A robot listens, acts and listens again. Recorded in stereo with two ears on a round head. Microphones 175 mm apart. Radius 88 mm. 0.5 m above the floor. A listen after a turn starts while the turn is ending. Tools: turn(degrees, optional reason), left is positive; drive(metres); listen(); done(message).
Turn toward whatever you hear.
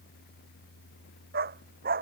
turn(degrees=-50, reason="The dog barking: about 50° right or 130° right.")
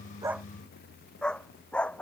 done("Found it: a dog barking, straight ahead.")